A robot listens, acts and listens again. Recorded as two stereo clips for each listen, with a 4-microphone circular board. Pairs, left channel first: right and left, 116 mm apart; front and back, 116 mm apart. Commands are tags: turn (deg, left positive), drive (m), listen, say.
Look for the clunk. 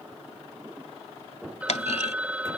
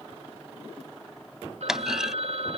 <turn deg="-95"/>
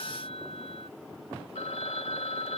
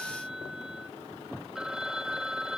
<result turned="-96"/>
<say>Facing where the clunk came from. I can't hear it now.</say>